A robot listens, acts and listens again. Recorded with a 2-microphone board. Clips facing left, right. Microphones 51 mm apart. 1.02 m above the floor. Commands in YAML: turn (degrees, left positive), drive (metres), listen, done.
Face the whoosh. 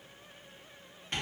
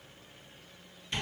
listen: true
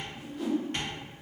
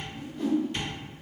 turn: 30
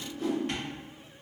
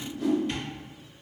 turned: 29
turn: 145
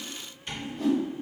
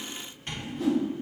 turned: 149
done: "Facing the whoosh, 1 to 2 m away."